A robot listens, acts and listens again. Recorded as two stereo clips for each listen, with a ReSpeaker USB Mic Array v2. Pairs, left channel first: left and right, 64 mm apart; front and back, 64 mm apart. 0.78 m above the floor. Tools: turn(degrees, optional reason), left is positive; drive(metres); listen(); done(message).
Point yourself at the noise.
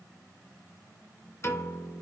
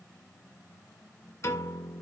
turn(degrees=40, reason="The piano: 40° left.")
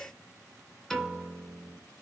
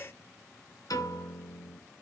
done("Found it: a piano, straight ahead, 2 to 4 m away.")